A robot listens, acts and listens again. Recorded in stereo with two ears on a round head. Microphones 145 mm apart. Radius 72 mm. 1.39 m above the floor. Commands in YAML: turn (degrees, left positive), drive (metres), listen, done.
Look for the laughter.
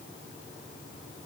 listen: true
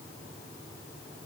listen: true
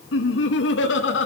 turn: 90
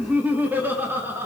turn: -15
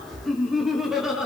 done: "Found it: laughter, straight ahead, over 4 m away."